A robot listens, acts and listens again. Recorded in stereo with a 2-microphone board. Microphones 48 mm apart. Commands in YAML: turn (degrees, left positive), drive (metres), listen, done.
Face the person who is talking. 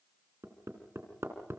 listen: true
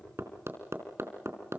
listen: true
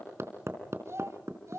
turn: -90
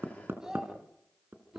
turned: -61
done: "Found it: a child speaking, straight ahead, 2 to 4 m away."